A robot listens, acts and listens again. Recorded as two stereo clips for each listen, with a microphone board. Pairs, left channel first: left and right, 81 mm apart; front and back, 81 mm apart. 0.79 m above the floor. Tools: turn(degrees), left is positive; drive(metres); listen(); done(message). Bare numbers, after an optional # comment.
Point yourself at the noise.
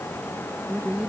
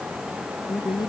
# The woman speaking: 20° right.
turn(-20)
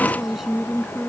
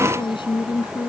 done("Facing the woman speaking.")